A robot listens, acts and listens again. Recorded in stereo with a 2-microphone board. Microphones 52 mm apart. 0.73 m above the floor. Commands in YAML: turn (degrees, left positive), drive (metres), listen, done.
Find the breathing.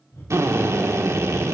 turn: 60
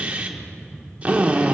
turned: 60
turn: 50
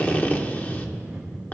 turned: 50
turn: -10
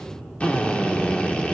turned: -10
done: "Found it: breathing, straight ahead, 2 to 4 m away."